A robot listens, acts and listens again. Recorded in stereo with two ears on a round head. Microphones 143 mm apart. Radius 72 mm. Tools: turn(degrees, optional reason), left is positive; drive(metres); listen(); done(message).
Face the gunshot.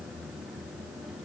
listen()
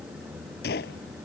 turn(degrees=70, reason="The gunshot: about 70° left or 110° left.")
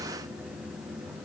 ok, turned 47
listen()
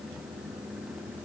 done("I heard a gunshot, but can't make it out now. It was about 25° left or 65° left.")